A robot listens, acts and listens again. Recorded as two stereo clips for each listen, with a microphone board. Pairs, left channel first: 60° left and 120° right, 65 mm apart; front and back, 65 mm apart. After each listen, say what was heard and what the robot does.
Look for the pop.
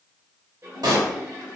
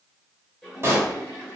The pop: 130° right. Turn 130° right.
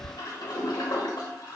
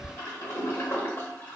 Facing where the pop came from. I can't hear it now.